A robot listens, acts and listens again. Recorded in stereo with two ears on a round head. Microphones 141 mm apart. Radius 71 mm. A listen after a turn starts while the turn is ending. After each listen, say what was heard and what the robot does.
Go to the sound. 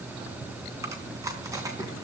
The chewing: about 20° right or 160° right. Turn 20° right.
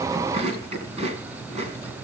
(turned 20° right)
So it is at 135° right. Turn 135° right.
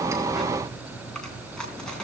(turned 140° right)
Drive 1.0 m forward.
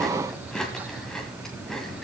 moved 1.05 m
Drive 1.0 m forward.
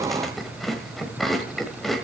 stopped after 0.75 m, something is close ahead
I am next to the chewing.